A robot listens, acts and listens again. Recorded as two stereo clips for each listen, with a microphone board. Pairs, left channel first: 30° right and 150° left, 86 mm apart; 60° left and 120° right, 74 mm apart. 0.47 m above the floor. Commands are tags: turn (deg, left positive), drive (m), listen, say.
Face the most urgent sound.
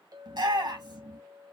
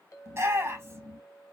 <turn deg="-175"/>
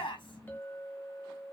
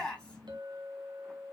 <turn deg="-15"/>
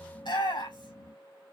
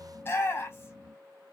<say>Found it: a shout, straight ahead.</say>